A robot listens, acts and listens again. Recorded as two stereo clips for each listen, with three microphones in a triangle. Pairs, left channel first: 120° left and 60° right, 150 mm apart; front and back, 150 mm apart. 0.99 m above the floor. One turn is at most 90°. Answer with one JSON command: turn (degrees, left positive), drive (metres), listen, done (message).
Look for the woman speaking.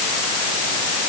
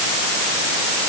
{"listen": true}
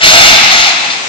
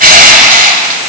{"listen": true}
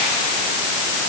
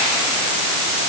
{"done": "I can't make out a woman speaking to turn to."}